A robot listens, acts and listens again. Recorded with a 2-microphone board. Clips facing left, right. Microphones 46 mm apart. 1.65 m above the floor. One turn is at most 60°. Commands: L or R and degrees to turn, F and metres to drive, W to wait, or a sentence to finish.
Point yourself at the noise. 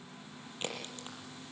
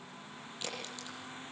L35
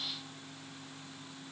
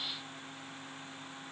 W
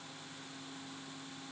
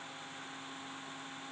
I heard a crack, but can't make it out now. It was about straight ahead or 110° left.